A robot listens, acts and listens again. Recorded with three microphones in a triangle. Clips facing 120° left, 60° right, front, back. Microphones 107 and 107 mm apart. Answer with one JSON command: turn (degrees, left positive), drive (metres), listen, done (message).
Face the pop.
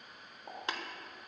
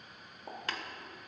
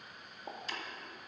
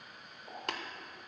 {"turn": 20}
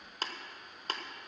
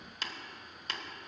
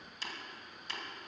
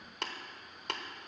{"done": "I heard a pop from this way, but can't make it out now."}